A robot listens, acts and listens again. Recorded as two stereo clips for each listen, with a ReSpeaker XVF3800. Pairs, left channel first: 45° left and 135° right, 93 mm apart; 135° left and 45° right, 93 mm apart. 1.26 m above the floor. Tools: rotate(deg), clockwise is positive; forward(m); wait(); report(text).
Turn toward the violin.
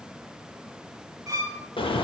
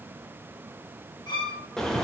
rotate(-170)
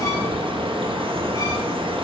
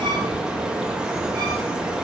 wait()
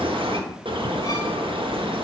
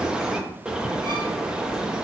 wait()
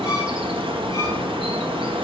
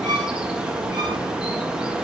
report("I heard a violin from this way, but can't make it out now.")